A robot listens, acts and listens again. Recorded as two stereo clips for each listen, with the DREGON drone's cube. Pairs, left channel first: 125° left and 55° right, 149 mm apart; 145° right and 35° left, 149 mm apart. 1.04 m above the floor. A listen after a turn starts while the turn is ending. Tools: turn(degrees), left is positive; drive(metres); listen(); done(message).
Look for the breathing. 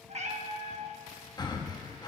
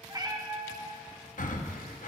turn(degrees=-175)
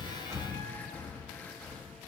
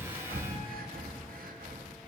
turn(degrees=45)
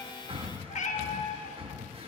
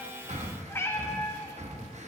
done("Found it: breathing, straight ahead.")